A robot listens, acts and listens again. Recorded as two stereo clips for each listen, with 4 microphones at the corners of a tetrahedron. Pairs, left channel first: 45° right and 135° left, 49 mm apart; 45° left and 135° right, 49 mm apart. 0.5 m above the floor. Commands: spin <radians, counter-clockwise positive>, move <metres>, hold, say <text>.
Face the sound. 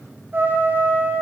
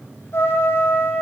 spin 1.48
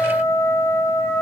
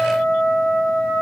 spin -0.35
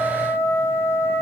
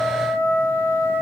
say Found it: a trumpet, straight ahead, over 4 m away.